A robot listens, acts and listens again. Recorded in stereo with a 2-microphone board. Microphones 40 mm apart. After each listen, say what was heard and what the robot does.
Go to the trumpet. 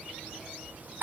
Keep listening.
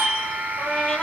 Turn 30° left.
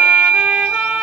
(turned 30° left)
Keep listening.
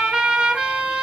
So it is at 25° right. Turn 25° right.
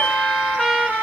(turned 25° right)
Drive 1.0 m forward.
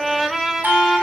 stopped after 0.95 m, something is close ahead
Arrived at the trumpet, straight ahead.